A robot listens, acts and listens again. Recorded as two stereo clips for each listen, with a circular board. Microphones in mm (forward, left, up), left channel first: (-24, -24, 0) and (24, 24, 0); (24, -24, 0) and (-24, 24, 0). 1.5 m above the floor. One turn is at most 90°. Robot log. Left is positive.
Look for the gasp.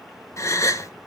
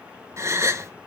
note: The gasp: straight behind.
cmd yaw +90
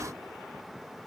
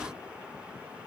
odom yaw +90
note: Nothing new. It was at 90° left.
cmd yaw +90
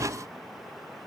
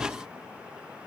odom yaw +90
end: I heard a gasp from this way, but can't make it out now.